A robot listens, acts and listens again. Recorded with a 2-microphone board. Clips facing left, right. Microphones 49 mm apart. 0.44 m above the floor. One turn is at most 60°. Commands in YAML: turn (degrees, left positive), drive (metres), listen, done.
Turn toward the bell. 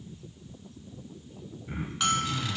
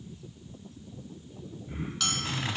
turn: 25
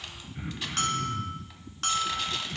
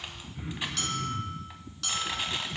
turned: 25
turn: 60
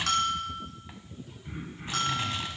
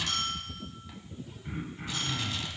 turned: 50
turn: 60
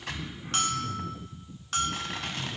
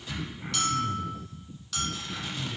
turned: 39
turn: 40
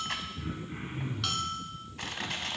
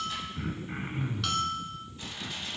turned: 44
done: "Facing the bell, under 1 m away."